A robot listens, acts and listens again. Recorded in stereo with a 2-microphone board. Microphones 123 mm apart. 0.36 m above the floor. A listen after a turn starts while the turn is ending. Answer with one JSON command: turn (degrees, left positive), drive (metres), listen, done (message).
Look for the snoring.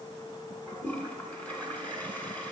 {"listen": true}
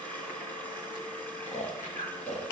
{"turn": 65}
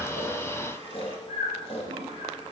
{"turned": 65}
{"turn": 50}
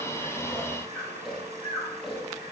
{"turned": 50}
{"done": "Facing the snoring."}